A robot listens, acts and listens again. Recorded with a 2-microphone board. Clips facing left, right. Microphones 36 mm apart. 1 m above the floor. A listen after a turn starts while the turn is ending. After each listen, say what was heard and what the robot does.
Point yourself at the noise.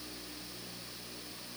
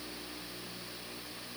Keep listening.
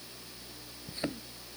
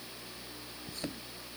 The thud: about 25° left or 155° left. Turn 25° left.
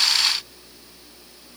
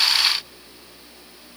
Keep listening.
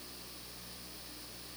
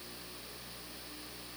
I heard a thud, but can't make it out now. It was about straight ahead or 130° left.